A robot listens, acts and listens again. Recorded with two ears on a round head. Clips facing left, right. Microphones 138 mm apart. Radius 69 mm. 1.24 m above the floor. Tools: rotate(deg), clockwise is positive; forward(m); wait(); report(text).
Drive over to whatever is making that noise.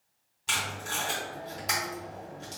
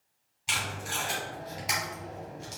rotate(-30)
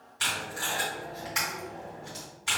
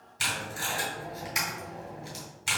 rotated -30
rotate(30)
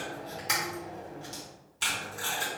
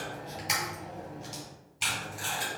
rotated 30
forward(1.0)
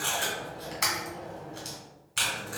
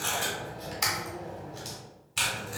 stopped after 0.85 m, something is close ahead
report("Arrived at the tape being pulled, straight ahead.")